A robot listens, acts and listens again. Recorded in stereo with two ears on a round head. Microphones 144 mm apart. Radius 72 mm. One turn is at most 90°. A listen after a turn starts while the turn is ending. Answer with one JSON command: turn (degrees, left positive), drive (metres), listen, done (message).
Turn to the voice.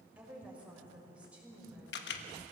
{"turn": -30}
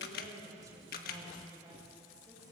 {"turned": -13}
{"turn": -90}
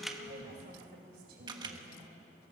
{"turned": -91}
{"turn": -65}
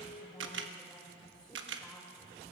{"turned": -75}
{"turn": 10}
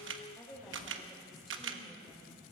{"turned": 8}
{"done": "Found it: a woman speaking, straight ahead, over 4 m away."}